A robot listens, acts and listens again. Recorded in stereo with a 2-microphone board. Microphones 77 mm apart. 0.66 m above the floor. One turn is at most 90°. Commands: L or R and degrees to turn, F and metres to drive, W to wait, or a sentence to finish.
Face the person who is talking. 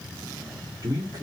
R50
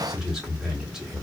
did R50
R10
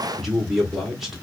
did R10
Facing the man speaking, 1 to 2 m away.